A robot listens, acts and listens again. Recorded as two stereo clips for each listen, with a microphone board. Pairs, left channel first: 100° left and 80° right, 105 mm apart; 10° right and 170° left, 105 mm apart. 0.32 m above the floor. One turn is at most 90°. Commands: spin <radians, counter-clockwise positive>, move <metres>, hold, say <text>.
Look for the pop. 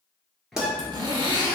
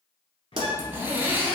spin -1.57
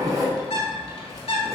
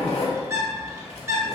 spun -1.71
spin -1.13
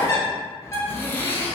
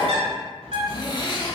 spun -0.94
spin -0.17
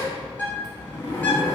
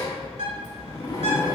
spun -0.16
say Facing where the pop came from. I can't hear it now.